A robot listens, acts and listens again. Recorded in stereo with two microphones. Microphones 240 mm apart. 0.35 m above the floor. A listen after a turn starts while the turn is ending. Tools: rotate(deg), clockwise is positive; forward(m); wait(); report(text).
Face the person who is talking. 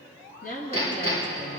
rotate(-35)
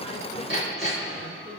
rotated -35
wait()
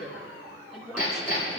report("Found it: a woman speaking, straight ahead, 2 to 4 m away.")